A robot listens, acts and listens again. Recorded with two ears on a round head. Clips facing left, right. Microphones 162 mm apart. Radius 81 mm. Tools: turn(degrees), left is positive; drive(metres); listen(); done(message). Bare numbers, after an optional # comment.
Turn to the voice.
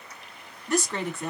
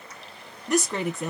turn(-30)
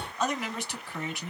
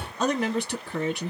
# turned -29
# So it is at 135° right.
turn(-135)
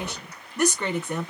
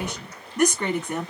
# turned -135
done("Found it: a woman speaking, straight ahead.")